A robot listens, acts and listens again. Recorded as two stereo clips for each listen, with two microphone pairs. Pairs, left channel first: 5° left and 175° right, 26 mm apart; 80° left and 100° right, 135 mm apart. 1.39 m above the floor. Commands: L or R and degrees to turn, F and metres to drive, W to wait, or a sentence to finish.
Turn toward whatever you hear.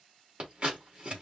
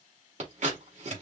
R130
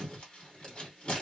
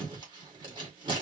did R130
R45
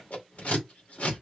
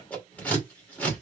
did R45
Facing the scissors, 2 to 4 m away.